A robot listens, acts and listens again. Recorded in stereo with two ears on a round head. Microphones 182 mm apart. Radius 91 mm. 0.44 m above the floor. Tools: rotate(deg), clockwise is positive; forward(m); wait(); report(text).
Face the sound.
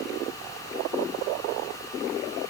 wait()
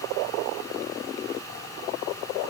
wait()
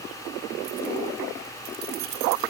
rotate(70)
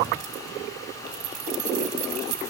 rotate(40)
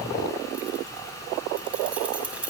report("Facing the keys jangling, 1 to 2 m away.")